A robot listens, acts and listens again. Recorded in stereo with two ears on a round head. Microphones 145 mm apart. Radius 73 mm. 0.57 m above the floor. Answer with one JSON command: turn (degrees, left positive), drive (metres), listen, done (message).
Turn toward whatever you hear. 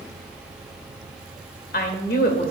{"turn": 65}
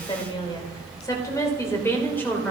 {"turn": 10}
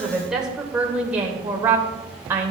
{"turn": -15}
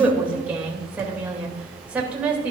{"turn": -10}
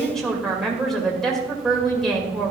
{"done": "Facing the woman speaking."}